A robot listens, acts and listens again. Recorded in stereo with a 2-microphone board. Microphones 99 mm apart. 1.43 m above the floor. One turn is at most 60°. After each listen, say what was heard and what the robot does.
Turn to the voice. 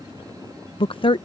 The woman speaking: about 55° left or 125° left. Turn 55° left.
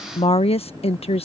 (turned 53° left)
So it is at 70° left. Turn 60° left.
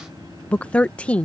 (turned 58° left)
The woman speaking is now 10° left. Turn 10° left.
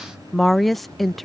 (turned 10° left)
Found it: a woman speaking, straight ahead.